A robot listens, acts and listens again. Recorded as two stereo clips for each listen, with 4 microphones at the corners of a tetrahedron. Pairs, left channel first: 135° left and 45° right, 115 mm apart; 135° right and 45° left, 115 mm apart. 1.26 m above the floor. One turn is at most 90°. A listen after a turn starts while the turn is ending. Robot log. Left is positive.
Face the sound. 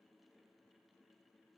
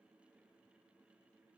cmd idle
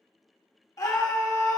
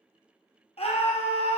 note: The scream: 165° right.
cmd yaw -90
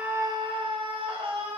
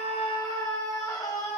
note: The scream is now 80° right.
cmd yaw -80
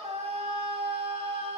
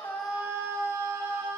note: The scream is now 20° right.
cmd yaw -20
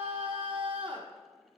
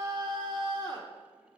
end: Found it: a scream, straight ahead.